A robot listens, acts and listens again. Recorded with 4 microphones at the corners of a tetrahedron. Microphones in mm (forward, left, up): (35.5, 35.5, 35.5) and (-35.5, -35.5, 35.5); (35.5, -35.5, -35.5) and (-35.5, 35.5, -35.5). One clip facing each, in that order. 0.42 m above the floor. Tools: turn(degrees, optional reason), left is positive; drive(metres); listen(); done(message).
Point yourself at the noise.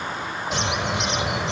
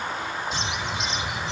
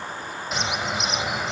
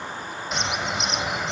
turn(degrees=45, reason="The bird: 45° left.")
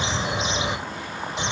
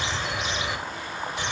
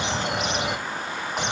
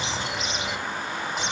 turn(degrees=-20, reason="The bird is now 20° right.")
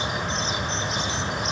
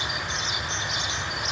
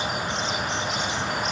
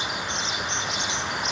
turn(degrees=-10, reason="The bird is now 10° right.")
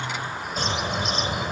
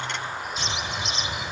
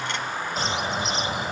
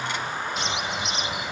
done("Found it: a bird, straight ahead.")